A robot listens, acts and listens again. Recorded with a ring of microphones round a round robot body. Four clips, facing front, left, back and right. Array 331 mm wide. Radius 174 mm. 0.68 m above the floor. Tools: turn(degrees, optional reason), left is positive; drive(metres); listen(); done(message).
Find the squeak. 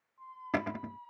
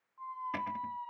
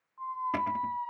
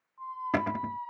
turn(degrees=-165, reason="The squeak: 165° right.")
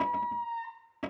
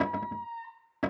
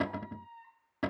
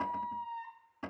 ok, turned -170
done("Found it: a squeak, straight ahead.")